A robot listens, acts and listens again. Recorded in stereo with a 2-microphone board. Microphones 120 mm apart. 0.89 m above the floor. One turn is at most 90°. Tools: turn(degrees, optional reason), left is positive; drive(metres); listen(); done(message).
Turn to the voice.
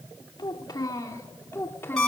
turn(degrees=20, reason="The child speaking: about 20° left or 160° left.")
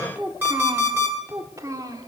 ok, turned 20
turn(degrees=-30, reason="So it is at 30° right.")
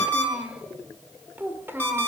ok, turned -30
turn(degrees=-20, reason="The child speaking is now 20° right.")
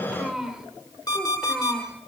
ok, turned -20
done("Facing the child speaking, 2 to 4 m away.")